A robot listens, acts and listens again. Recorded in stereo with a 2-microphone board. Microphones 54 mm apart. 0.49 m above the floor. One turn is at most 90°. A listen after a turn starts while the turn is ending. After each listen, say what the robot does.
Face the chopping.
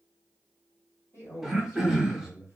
Keep listening.
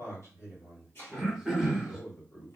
Turn 45° left.
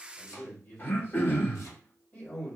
Keep listening.
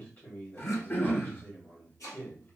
Turn 85° left.
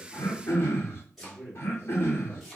Facing the chopping, 1 to 2 m away.